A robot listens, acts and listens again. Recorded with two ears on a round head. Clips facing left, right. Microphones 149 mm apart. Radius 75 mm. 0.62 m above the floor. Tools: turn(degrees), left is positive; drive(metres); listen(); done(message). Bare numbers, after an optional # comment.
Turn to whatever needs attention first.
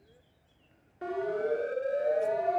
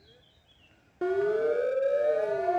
# The siren: about 55° right or 125° right.
turn(-55)
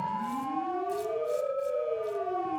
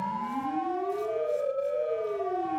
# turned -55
# So it is at 10° right.
turn(-10)
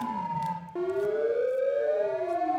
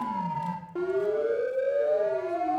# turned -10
done("Found it: a siren, straight ahead.")